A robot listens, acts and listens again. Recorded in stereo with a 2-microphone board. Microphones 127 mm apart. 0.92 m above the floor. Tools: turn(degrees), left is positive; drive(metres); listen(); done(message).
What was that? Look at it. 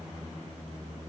listen()
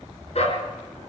turn(degrees=55)
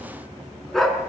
done("Found it: a dog barking, straight ahead, over 4 m away.")